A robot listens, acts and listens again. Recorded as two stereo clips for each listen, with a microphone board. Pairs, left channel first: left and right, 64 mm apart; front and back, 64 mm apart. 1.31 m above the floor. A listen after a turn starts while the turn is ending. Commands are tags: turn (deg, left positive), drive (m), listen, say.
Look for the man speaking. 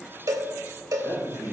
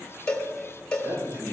<turn deg="-110"/>
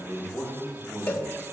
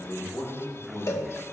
<say>Found it: a man speaking, straight ahead, over 4 m away.</say>